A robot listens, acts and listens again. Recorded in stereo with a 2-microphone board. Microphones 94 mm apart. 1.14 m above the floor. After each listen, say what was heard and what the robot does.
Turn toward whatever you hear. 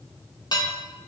The dishes clattering: about 45° left or 135° left. Turn 45° left.
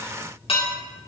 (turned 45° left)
So it is at 90° left. Turn 90° left.
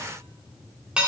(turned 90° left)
The dishes clattering is now 10° right. Turn 10° right.
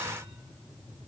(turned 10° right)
Keep listening.
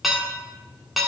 Found it: dishes clattering, straight ahead.